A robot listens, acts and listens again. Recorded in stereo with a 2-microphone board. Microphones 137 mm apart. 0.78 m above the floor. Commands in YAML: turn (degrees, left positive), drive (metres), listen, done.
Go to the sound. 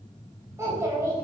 turn: -20
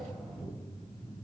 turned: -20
drive: 1.0
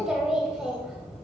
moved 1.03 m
drive: 1.0
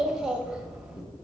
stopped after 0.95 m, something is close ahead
done: "Arrived at the child speaking, straight ahead."